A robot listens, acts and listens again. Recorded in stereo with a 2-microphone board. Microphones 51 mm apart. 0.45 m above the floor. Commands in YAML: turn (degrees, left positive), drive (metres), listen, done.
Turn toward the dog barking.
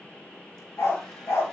turn: 75
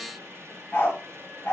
turn: 35
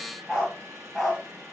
turn: -10
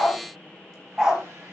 turn: -15
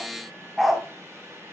done: "Facing the dog barking, 1 to 2 m away."